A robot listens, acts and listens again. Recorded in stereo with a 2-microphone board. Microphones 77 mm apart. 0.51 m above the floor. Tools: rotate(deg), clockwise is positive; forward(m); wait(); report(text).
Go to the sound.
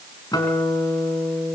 rotate(-60)
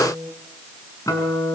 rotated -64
rotate(-55)
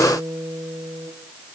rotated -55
forward(1.0)
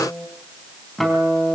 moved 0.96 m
forward(1.0)
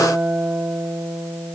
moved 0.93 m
forward(1.0)
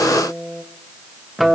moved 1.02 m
forward(1.0)
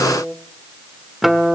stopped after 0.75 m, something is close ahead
report("I am next to the guitar.")